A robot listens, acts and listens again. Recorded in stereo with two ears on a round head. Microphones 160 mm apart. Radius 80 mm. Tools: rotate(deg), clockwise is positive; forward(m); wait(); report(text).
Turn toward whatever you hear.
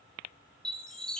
rotate(-30)
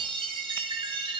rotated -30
rotate(30)
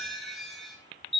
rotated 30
report("Facing the chime.")